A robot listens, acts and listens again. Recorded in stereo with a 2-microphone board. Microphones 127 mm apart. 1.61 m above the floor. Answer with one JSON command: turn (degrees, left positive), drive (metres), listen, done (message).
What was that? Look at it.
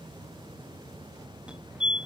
{"turn": -30}
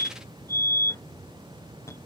{"turn": 25}
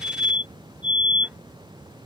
{"turn": -15}
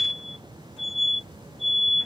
{"done": "Found it: a fire alarm, straight ahead."}